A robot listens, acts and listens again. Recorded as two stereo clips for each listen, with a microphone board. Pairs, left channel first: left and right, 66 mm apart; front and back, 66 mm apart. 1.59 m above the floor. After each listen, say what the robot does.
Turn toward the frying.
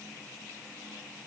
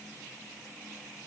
Keep listening.
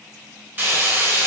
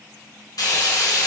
Turn 30° right.
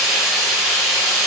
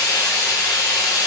Turn 10° right.
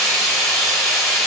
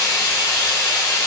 Facing the frying, 1 to 2 m away.